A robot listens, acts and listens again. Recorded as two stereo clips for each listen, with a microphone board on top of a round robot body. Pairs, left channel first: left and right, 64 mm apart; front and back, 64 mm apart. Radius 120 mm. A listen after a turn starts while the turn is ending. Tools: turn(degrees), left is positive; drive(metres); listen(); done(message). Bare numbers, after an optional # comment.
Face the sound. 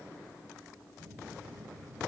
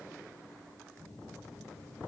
# The phone buzzing: 85° right.
turn(-85)
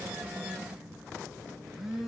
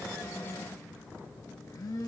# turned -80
# The phone buzzing is now 10° right.
turn(-10)
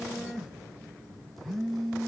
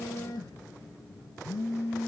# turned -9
done("Facing the phone buzzing, 2 to 4 m away.")